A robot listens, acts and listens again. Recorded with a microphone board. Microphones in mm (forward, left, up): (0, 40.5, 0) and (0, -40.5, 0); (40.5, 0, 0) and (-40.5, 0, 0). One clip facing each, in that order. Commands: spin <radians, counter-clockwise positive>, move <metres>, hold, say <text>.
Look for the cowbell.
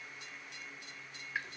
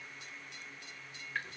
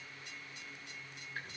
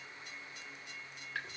hold
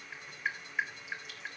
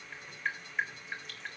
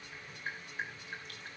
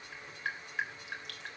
hold
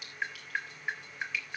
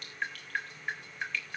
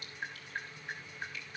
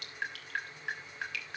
say I can't make out a cowbell to turn to.